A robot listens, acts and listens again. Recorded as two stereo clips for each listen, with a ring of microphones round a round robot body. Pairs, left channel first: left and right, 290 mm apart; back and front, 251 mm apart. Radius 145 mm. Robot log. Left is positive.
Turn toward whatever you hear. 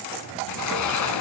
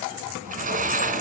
note: The sliding door: 60° left.
cmd yaw +60
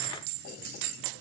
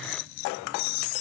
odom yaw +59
cmd idle
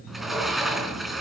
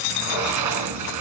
end: Facing the sliding door, 2 to 4 m away.